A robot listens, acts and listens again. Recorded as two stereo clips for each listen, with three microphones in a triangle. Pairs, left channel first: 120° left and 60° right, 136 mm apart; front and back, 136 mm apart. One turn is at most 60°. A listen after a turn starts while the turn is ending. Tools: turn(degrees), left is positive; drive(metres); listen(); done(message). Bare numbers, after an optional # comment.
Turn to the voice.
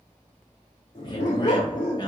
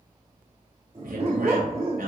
# The man speaking: straight behind.
turn(60)
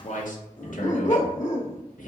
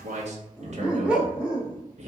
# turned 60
# The man speaking is now 145° left.
turn(60)
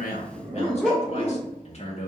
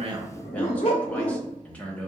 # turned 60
# The man speaking is now 80° left.
turn(60)
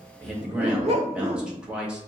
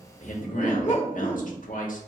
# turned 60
# The man speaking is now 25° left.
turn(25)
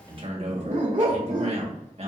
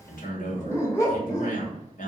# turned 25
# The man speaking is now 20° right.
turn(-20)
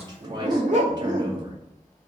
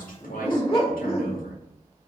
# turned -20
done("Facing the man speaking.")